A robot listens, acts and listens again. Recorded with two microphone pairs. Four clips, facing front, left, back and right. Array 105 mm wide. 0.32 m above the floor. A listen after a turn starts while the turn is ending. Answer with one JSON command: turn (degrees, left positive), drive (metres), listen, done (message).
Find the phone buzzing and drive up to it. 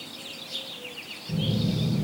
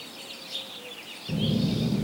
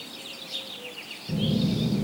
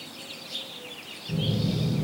{"turn": 115}
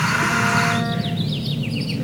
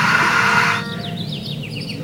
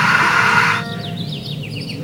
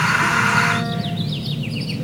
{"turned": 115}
{"turn": 20}
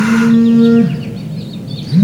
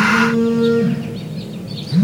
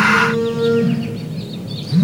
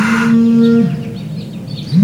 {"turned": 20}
{"turn": 10}
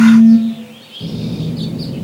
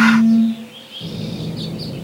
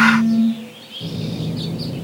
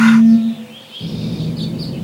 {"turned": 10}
{"drive": 1.0}
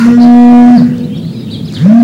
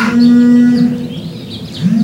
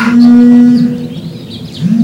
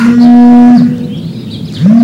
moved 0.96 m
{"drive": 1.0}
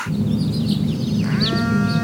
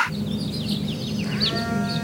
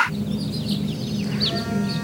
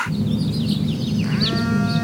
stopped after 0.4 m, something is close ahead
{"done": "I am next to the phone buzzing."}